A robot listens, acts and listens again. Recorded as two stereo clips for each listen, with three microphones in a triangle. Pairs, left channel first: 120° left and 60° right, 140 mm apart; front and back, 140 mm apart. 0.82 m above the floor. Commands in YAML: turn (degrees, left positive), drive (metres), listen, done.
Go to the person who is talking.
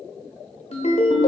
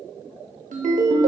listen: true
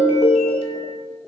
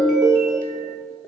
listen: true
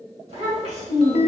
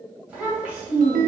turn: -100
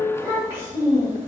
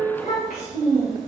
turn: 10
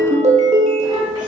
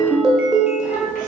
listen: true
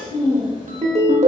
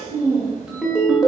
drive: 1.0
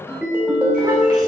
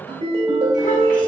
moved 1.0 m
listen: true
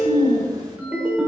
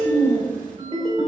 drive: 1.0
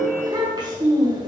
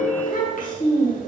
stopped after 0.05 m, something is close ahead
done: "Arrived at the child speaking, straight ahead."